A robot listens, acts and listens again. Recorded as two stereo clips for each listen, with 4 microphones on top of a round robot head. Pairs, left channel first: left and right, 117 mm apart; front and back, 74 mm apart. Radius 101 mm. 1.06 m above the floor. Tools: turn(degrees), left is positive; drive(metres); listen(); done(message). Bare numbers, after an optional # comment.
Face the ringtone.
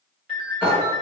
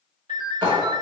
# The ringtone: 130° right.
turn(-130)
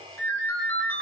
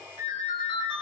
# The ringtone is now 20° left.
turn(20)
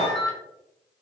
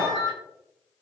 done("Found it: a ringtone, straight ahead.")